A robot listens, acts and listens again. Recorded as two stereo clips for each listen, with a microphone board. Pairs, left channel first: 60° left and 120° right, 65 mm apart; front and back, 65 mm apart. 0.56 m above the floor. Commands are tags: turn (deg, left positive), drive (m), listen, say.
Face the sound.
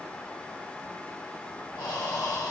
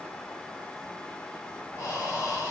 <turn deg="45"/>
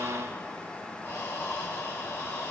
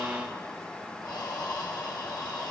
<say>Found it: breathing, straight ahead.</say>